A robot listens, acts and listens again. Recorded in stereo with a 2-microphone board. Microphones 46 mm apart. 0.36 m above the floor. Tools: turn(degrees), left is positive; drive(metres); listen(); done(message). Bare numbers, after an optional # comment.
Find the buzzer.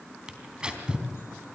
listen()
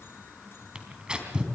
listen()
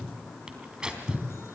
done("I can't make out a buzzer to turn to.")